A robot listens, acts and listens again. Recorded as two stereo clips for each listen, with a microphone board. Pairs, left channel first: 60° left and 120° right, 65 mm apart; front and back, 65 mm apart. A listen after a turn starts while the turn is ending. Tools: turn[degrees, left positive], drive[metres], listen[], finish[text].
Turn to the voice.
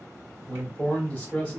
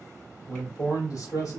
Thought: The man speaking: 10° right.
Action: turn[-10]
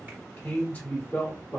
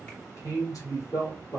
Action: finish[Facing the man speaking.]